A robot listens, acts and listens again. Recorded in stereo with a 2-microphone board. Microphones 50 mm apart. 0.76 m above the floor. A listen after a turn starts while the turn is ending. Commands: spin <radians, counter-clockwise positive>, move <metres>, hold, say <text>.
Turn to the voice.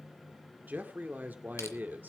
spin -0.70
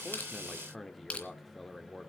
say Facing the man speaking, 1 to 2 m away.